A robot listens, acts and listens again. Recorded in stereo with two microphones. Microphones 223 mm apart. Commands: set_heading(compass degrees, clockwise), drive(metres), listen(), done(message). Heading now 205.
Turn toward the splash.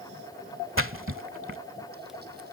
set_heading(275)
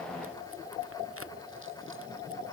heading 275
listen()
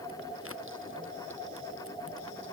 done("I heard a splash, but can't make it out now. It was about straight ahead or 40° right.")